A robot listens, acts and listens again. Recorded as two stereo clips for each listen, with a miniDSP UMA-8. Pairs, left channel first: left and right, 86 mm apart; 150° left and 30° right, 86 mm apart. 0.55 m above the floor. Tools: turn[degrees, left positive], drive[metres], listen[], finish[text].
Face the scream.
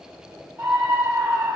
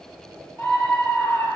Thought: The scream: 145° right.
Action: turn[-145]
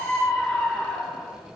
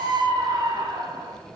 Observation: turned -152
Action: finish[Facing the scream.]